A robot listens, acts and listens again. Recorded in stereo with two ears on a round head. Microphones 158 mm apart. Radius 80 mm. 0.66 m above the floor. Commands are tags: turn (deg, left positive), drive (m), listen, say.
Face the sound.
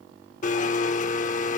<turn deg="45"/>
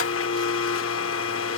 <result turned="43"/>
<turn deg="90"/>
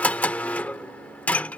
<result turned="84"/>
<say>Facing the blender.</say>